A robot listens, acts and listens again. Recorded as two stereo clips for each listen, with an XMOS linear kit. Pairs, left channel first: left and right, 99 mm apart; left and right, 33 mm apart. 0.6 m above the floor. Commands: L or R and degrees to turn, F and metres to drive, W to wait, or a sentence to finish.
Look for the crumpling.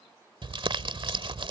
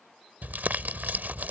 R60
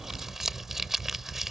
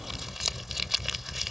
Facing the crumpling.